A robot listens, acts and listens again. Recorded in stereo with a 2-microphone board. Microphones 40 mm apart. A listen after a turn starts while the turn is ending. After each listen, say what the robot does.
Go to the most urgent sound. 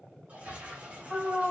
Turn 20° left.
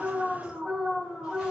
Turn 140° left.
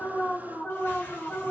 Turn 15° left.
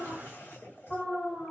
Drive 1.0 m forward.
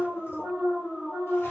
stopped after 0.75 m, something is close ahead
Turn 10° left.
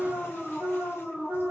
Arrived at the alarm, straight ahead.